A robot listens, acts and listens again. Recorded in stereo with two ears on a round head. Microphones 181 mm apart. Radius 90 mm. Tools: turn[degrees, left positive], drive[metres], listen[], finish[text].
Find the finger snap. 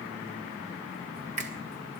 Thought: The finger snap: about 35° right or 145° right.
Action: turn[-35]
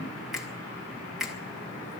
Action: finish[Found it: a finger snap, straight ahead, 1 to 2 m away.]